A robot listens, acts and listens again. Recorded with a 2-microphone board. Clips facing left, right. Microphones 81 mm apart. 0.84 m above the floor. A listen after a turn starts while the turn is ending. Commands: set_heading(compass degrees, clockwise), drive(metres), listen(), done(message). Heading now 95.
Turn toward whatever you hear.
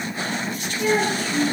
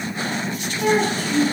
set_heading(185)
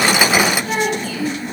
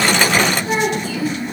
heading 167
set_heading(187)
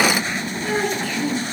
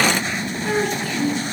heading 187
done("Facing the child speaking, over 4 m away.")